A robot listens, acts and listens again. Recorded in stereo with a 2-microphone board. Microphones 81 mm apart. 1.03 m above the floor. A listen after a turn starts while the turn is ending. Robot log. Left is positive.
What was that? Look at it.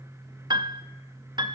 note: The piano: about 55° right or 125° right.
cmd yaw -55
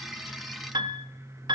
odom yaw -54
note: So it is at 65° right.
cmd yaw -65
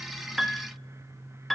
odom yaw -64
end: Facing the piano.